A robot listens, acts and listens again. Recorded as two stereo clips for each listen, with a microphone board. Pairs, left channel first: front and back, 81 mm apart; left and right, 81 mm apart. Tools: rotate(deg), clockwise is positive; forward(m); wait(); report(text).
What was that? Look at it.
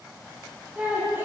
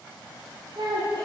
rotate(120)
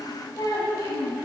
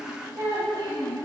rotate(55)
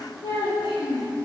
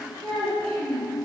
rotate(25)
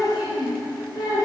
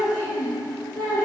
report("Facing the child speaking.")